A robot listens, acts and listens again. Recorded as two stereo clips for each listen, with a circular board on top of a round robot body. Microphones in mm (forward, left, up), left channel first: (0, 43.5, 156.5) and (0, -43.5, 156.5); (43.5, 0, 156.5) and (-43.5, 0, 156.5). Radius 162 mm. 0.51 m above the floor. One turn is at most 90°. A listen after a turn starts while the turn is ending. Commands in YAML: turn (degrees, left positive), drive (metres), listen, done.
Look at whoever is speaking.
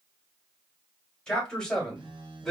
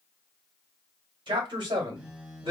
turn: 90
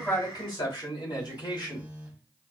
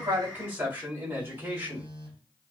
turn: 90
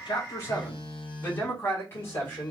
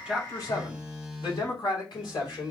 turn: 35
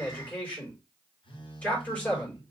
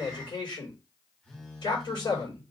turn: 20
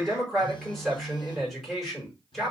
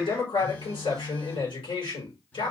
done: "Facing the man speaking, over 4 m away."